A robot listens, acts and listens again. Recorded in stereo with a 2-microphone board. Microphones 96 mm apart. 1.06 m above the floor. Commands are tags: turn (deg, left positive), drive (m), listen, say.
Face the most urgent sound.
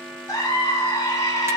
<turn deg="35"/>
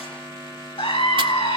<turn deg="110"/>
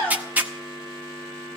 <turn deg="10"/>
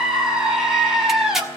<say>Found it: a scream, straight ahead, over 4 m away.</say>